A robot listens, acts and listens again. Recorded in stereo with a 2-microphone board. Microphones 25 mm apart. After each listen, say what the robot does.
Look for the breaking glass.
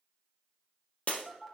Turn 55° left.
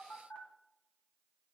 Keep listening.
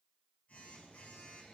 I heard breaking glass, but can't make it out now. It was about straight ahead or 70° left.